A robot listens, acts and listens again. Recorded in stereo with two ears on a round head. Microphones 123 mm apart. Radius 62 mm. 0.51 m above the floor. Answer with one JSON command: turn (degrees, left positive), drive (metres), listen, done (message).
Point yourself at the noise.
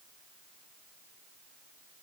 {"listen": true}
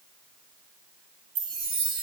{"turn": -40}
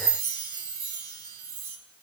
{"turn": -100}
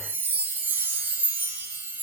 {"turn": -20}
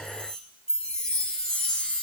{"done": "Found it: a chime, straight ahead."}